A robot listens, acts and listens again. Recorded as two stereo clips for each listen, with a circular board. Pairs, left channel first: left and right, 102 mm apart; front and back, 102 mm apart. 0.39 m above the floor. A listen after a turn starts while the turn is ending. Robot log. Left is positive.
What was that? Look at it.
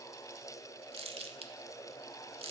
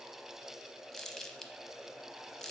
note: The crumpling: 85° right.
cmd yaw -85
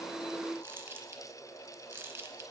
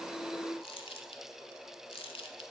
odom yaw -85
note: The crumpling is now 25° right.
cmd yaw -25
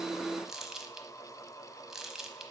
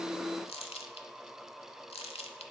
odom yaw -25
end: Found it: crumpling, straight ahead, under 1 m away.